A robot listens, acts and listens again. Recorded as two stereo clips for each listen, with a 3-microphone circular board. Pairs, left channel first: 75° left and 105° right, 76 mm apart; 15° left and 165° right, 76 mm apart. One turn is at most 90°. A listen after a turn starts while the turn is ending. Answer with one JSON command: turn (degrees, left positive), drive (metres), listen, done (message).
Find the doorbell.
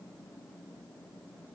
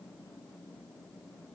{"listen": true}
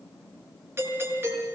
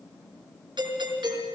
{"turn": -90}
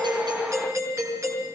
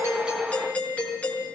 {"turn": -55}
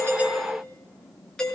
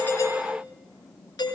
{"done": "Facing the doorbell, over 4 m away."}